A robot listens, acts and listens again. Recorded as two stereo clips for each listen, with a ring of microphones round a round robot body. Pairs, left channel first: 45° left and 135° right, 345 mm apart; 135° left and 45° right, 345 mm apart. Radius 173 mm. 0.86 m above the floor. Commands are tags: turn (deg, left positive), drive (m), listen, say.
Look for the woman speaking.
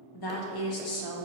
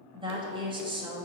<turn deg="30"/>
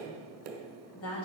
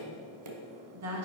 <say>Found it: a woman speaking, straight ahead, 1 to 2 m away.</say>